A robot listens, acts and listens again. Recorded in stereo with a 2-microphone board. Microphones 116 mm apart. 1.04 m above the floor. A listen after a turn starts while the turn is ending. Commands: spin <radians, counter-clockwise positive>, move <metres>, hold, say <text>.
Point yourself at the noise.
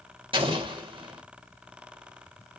spin -0.87
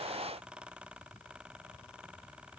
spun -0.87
hold
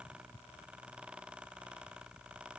say I heard an explosion, but can't make it out now. It was about straight ahead or 80° right.